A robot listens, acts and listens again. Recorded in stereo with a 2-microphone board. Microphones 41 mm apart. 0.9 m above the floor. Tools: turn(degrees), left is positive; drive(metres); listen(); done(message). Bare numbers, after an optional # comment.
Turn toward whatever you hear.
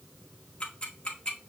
# The ticking: about 30° left or 150° left.
turn(30)
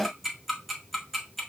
done("Facing the ticking, 1 to 2 m away.")